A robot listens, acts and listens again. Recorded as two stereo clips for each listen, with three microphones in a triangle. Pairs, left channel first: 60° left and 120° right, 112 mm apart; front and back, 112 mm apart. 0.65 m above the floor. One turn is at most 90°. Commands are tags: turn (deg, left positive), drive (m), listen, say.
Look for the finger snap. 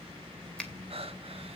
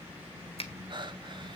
<turn deg="-20"/>
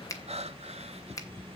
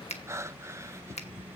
<say>Found it: a finger snap, straight ahead.</say>